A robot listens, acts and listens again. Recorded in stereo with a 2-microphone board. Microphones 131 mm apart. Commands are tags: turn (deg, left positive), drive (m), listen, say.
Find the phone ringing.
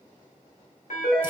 <turn deg="90"/>
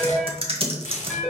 <say>Found it: a phone ringing, straight ahead.</say>